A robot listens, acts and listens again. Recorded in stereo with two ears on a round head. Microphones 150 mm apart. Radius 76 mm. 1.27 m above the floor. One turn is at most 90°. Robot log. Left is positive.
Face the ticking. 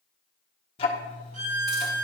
note: The ticking: about 35° left or 145° left.
cmd yaw +35
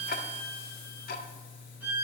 note: So it is at 105° left.
cmd yaw +90
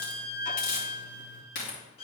note: Nothing new. It was at 15° left.
cmd yaw +15
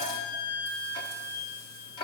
note: The ticking is now 35° left.
cmd yaw +35
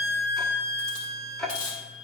end: Found it: ticking, straight ahead.